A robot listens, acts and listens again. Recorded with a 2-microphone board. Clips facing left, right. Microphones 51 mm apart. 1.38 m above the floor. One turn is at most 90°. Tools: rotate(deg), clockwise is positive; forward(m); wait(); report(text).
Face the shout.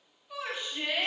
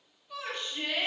rotate(-30)
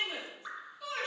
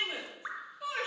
rotate(20)
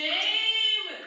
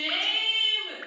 report("Facing the shout.")